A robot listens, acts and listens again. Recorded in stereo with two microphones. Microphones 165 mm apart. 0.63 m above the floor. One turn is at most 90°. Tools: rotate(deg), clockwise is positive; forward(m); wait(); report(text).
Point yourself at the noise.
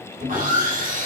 rotate(55)
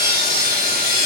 rotate(70)
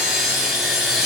report("Found it: sawing, straight ahead.")